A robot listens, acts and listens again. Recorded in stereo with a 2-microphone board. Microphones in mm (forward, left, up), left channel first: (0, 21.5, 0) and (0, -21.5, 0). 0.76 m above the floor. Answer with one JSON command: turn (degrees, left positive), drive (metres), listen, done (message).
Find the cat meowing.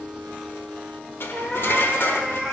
{"turn": -30}
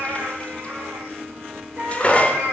{"turn": -125}
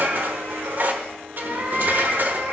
{"turn": -45}
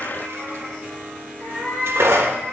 {"done": "Facing the cat meowing, over 4 m away."}